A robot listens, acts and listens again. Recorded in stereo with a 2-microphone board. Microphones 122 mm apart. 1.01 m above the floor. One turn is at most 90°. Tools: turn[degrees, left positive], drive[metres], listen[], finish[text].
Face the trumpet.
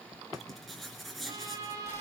Thought: The trumpet: about 30° right or 150° right.
Action: turn[-30]
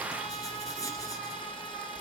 Action: listen[]
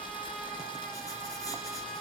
Action: listen[]
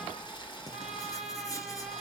Action: finish[Found it: a trumpet, straight ahead.]